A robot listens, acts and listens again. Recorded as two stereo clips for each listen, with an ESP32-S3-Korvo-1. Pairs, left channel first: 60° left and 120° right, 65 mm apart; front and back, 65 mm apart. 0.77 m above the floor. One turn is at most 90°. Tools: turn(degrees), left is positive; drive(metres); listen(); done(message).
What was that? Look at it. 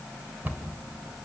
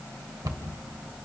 turn(degrees=90)
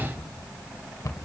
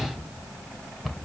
turn(degrees=90)
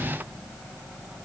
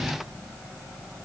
listen()
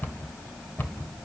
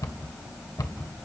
done("Facing the cupboard door, 1 to 2 m away.")